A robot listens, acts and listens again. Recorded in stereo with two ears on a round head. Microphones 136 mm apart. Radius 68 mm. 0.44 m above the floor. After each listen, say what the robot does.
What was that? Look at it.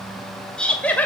Turn 30° left.
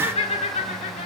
Turn 130° left.
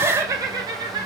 Turn 35° right.
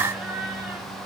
Found it: laughter, straight ahead, 2 to 4 m away.